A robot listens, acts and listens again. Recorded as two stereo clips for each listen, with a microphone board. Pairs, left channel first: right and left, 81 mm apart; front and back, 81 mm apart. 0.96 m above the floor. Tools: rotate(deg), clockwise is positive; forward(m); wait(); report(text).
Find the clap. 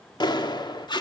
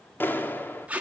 rotate(65)
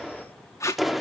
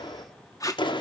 report("Facing the clap.")